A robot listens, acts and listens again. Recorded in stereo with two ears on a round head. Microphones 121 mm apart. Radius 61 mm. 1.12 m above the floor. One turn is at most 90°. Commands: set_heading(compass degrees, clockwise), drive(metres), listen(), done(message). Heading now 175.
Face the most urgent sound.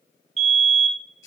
set_heading(225)
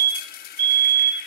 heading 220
set_heading(300)
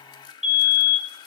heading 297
done("Found it: a fire alarm, straight ahead.")